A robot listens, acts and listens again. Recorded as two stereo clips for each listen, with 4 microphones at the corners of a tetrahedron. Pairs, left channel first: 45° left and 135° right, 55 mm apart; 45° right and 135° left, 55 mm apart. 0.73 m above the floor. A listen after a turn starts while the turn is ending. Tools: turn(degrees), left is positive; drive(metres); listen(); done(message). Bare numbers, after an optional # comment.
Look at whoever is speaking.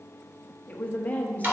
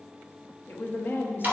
# The woman speaking: 10° right.
turn(-10)
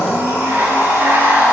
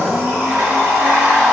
listen()
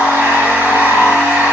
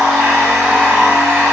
listen()
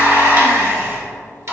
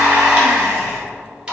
done("I heard a woman speaking from this way, but can't make it out now.")